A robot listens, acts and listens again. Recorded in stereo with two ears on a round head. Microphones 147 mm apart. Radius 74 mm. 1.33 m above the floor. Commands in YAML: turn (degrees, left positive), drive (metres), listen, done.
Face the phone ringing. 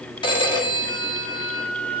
turn: 30
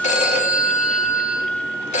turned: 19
turn: 135
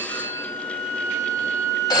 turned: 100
turn: 25
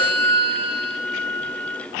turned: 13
turn: 15
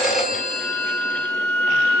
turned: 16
done: "Facing the phone ringing, 1 to 2 m away."